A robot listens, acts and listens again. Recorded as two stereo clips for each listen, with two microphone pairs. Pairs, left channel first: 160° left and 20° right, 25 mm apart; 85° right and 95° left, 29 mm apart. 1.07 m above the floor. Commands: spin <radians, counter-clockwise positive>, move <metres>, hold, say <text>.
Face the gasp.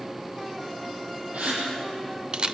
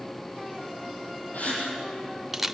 spin -0.87
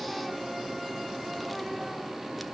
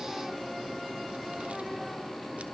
say Facing where the gasp came from. I can't hear it now.